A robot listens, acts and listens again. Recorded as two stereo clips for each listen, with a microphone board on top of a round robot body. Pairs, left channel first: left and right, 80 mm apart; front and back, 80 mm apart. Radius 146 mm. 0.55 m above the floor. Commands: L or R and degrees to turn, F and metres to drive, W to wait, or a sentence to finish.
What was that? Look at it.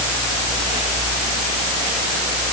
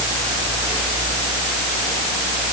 W
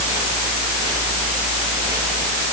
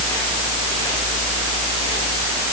W
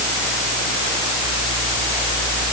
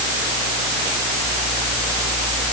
I can't make out anything to turn to.